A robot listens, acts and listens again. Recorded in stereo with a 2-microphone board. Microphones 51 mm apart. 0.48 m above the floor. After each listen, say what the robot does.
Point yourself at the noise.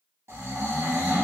Turn 65° right.
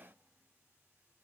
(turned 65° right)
Keep listening.
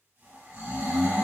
Turn 45° right.
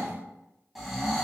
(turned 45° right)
Facing the snoring.